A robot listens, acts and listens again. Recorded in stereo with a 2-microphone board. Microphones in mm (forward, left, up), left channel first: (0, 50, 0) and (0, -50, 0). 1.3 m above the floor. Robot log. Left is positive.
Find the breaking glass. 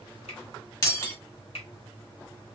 note: The breaking glass: about 35° left or 145° left.
cmd yaw +35
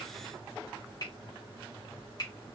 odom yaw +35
cmd idle
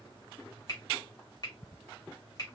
end: I heard breaking glass, but can't make it out now. It was about straight ahead or 110° left.